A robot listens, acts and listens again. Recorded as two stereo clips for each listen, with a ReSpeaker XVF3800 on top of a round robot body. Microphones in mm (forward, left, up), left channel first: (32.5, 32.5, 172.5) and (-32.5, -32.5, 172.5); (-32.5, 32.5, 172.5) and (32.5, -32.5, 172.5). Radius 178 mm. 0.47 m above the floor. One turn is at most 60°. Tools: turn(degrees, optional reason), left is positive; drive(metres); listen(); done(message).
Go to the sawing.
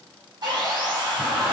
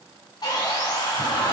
turn(degrees=60, reason="The sawing: straight behind.")
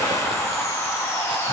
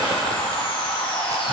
turn(degrees=60, reason="The sawing is now 110° left.")
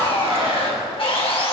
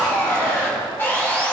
turn(degrees=60, reason="The sawing is now 65° left.")
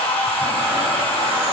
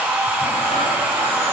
turn(degrees=25, reason="The sawing is now 25° left.")
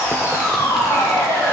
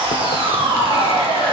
turn(degrees=-15, reason="The sawing is now 15° right.")
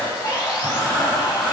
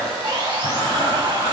drive(metres=1.0)
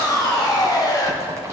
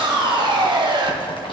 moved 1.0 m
drive(metres=1.0)
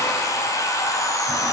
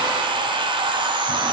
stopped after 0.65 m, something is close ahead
turn(degrees=-15, reason="The sawing is now 15° right.")
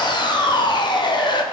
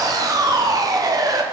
done("Arrived at the sawing, straight ahead.")